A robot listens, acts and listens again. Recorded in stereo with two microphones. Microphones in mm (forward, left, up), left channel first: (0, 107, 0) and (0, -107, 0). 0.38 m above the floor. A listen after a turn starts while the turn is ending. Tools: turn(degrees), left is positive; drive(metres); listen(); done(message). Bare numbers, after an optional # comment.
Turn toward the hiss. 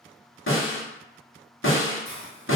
turn(30)
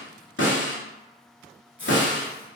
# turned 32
# So it is at 30° right.
turn(-30)
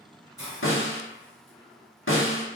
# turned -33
done("Facing the hiss.")